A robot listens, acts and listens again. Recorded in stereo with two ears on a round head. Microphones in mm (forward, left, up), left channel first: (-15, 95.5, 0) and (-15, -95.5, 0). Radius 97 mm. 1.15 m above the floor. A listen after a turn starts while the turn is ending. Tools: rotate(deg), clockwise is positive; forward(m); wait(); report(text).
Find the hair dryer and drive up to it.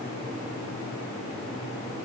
wait()
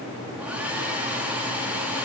rotate(30)
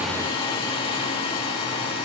rotate(-25)
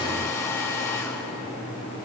rotate(-15)
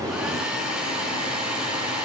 forward(1.0)
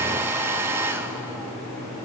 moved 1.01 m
rotate(10)
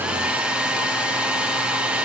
forward(1.0)
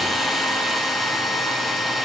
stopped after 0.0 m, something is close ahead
report("I am next to the hair dryer.")